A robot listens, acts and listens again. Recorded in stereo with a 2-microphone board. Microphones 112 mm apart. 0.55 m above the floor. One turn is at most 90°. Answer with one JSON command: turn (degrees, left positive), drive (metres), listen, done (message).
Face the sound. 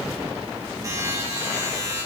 {"turn": -35}
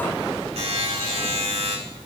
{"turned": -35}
{"turn": -90}
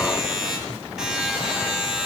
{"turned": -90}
{"done": "Facing the buzzer, 2 to 4 m away."}